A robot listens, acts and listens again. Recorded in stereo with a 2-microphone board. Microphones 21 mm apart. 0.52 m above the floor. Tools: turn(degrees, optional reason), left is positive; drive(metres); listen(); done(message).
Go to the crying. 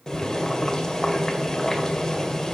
listen()
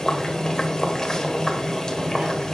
listen()
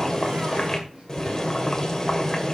done("I can't make out crying, only boiling.")